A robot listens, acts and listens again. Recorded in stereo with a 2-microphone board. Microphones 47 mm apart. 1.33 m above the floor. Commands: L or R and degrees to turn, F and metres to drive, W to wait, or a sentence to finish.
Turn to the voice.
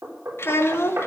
L60
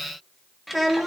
Found it: a child speaking, straight ahead, 1 to 2 m away.